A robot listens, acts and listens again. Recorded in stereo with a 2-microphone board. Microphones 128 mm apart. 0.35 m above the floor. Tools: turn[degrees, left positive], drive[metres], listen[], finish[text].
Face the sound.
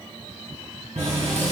Thought: The running tap: about 70° right or 110° right.
Action: turn[-70]
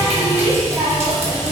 Thought: So it is at 25° right.
Action: turn[-25]
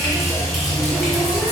Action: finish[Facing the running tap, 1 to 2 m away.]